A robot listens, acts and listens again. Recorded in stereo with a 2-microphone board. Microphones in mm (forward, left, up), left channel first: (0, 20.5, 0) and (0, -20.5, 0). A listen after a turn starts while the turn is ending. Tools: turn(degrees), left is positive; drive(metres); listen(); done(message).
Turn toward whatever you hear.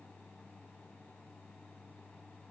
listen()
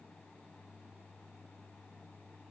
listen()
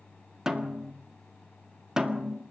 turn(degrees=-15)
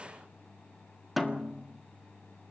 done("Facing the snare drum.")